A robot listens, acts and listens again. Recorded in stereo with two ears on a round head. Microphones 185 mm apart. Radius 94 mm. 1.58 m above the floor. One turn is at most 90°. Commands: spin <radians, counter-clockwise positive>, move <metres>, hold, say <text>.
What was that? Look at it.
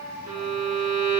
spin -0.79
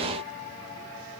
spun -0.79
hold
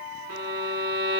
spin -1.57
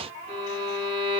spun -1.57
spin -0.52
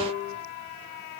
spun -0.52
say Found it: a violin, straight ahead.